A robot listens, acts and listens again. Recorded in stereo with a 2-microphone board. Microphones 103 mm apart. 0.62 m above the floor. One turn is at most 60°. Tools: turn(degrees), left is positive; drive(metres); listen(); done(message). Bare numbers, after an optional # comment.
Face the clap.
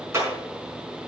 # The clap: about 25° right or 155° right.
turn(-25)
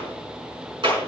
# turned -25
# So it is at 130° right.
turn(-60)
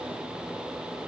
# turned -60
# Nothing new. It was at 70° right.
turn(-60)
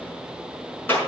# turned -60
# The clap is now 20° left.
turn(20)
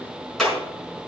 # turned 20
done("Facing the clap, over 4 m away.")